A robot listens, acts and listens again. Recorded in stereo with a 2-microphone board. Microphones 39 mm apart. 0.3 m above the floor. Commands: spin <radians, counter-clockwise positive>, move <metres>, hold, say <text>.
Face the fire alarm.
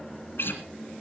hold
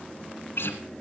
hold
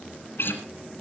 say I can't make out a fire alarm to turn to.